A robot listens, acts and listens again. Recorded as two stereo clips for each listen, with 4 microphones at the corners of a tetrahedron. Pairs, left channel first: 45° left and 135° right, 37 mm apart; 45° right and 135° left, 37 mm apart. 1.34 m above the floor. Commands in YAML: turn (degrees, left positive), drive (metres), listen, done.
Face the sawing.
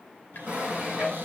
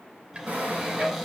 turn: 165
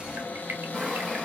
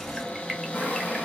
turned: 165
turn: -40
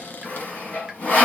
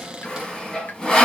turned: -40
turn: 20
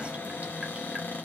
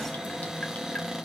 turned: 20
listen: true
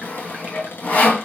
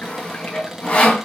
done: "Found it: sawing, straight ahead."